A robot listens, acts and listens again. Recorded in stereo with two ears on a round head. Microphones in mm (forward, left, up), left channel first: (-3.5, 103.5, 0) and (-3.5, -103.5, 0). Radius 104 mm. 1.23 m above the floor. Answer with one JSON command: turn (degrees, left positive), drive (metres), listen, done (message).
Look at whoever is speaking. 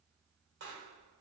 {"listen": true}
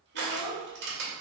{"turn": 75}
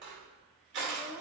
{"done": "Facing the child speaking."}